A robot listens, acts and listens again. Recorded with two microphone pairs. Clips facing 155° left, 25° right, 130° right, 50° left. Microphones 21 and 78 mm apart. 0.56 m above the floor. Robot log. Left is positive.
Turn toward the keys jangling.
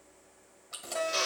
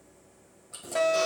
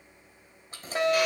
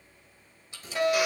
note: The keys jangling: 175° right.
cmd yaw -175
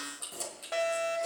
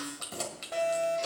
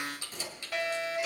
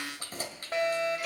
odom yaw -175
note: The keys jangling is now 10° left.
cmd yaw +10
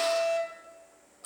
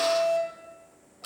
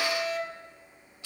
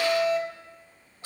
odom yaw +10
end: Found it: keys jangling, straight ahead, 2 to 4 m away.